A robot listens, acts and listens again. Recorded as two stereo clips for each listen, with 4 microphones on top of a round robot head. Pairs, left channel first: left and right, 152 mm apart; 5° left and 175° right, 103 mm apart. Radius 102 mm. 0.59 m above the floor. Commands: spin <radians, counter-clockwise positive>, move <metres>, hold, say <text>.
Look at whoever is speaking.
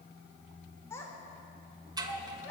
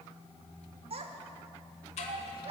spin 2.88
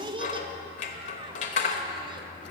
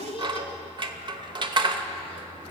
spin -0.52
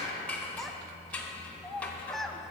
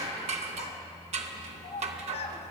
say Found it: a child speaking, straight ahead.